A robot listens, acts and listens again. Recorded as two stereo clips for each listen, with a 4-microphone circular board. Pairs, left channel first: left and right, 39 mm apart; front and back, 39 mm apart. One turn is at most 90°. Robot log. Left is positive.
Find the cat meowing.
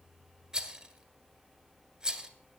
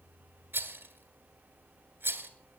cmd idle
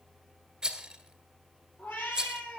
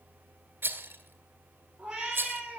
note: The cat meowing: 110° left.
cmd yaw +90
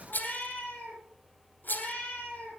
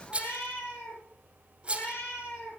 note: The cat meowing is now 25° left.
cmd yaw +25
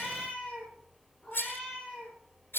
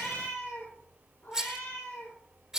note: The cat meowing is now 10° left.
cmd yaw +10
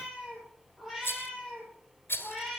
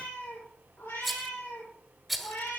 end: Facing the cat meowing, over 4 m away.